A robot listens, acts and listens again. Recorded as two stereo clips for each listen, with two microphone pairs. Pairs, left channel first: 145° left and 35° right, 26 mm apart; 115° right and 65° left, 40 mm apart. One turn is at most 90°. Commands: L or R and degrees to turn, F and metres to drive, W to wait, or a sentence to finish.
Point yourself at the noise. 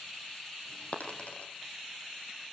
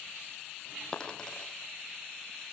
L90
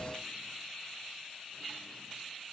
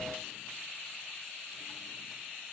L85
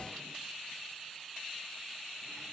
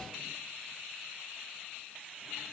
Facing where the dropped coin came from. I can't hear it now.